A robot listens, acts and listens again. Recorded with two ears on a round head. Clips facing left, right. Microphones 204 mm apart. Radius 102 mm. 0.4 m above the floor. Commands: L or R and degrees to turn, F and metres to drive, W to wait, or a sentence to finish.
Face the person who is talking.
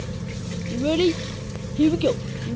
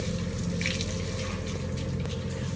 L90
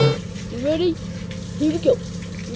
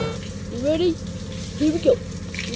Facing the child speaking.